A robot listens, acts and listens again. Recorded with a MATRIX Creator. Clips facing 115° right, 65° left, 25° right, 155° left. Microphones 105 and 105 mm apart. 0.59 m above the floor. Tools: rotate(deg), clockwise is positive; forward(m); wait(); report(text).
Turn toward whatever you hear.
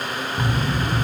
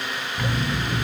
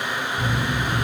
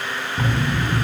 rotate(-180)
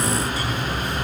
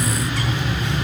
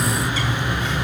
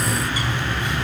rotate(-80)
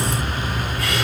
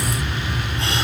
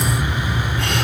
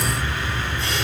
report("Found it: a bird, straight ahead.")